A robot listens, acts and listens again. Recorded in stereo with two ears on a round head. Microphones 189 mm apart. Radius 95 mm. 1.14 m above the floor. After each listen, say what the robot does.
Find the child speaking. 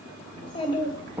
Turn 20° left.
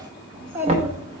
Turn 15° right.
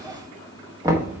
Facing the child speaking.